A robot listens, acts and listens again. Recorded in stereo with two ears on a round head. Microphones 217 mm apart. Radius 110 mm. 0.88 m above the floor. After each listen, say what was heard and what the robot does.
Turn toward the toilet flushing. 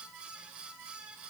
Keep listening.
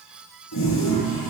The toilet flushing: about 75° left or 105° left. Turn 75° left.
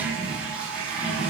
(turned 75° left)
Facing the toilet flushing, over 4 m away.